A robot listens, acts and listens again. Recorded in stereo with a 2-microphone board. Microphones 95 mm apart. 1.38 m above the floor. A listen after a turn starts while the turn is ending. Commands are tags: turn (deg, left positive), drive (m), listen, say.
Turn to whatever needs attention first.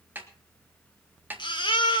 <turn deg="60"/>
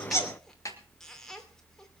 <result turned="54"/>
<listen/>
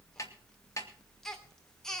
<say>Facing the baby crying.</say>